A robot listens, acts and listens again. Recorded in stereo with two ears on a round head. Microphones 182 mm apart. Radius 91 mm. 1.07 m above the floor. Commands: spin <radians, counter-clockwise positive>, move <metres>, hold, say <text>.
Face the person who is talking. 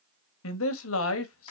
spin 1.57
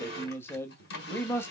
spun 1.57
spin 0.17
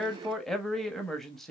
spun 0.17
say Facing the man speaking.